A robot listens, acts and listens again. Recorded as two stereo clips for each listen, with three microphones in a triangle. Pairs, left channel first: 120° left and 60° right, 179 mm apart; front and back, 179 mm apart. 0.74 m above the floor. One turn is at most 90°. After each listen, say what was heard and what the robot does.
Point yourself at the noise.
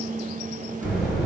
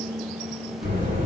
The buzzer: 150° right. Turn 90° right.
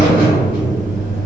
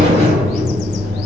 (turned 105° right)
The buzzer is now 40° right. Turn 40° right.
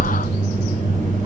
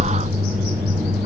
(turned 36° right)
The buzzer is now 10° right. Turn 10° right.
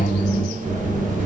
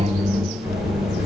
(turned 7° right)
Found it: a buzzer, straight ahead.